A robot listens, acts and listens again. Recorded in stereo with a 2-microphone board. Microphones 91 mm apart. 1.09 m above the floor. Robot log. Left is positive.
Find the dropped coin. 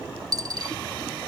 note: The dropped coin: about 45° right or 135° right.
cmd yaw -45
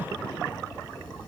cmd idle
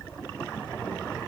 end: I heard a dropped coin, but can't make it out now. It was about straight ahead or 90° right.